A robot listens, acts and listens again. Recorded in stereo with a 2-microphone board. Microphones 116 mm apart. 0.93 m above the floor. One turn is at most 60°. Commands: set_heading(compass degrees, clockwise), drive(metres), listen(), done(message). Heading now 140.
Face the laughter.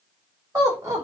set_heading(170)
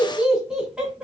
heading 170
set_heading(180)
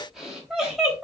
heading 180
done("Facing the laughter, 2 to 4 m away.")